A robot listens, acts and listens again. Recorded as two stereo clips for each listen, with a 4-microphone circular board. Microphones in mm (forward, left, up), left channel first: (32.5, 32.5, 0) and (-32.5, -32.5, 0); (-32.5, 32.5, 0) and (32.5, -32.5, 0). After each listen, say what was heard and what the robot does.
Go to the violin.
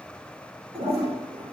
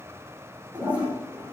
Keep listening.
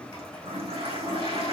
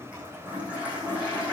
Keep listening.
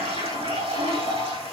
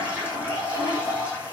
I can't make out a violin, only a toilet flushing.